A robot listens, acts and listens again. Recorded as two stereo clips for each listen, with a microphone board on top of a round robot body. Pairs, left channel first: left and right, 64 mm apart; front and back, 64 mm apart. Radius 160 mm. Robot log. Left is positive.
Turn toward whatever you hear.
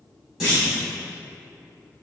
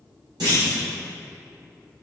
note: The clunk: 170° right.
cmd yaw -170
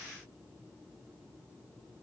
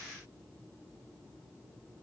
end: I heard a clunk from this way, but can't make it out now.